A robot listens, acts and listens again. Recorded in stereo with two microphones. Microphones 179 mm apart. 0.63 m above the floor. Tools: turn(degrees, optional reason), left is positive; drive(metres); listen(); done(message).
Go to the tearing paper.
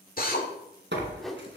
turn(degrees=-90)
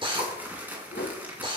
turn(degrees=-10, reason="So it is at 10° right.")
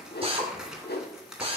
drive(metres=1.0)
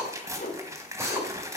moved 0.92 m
turn(degrees=-15, reason="The tearing paper is now 15° right.")
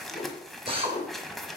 drive(metres=1.0)
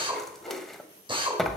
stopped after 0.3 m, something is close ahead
done("I am next to the tearing paper.")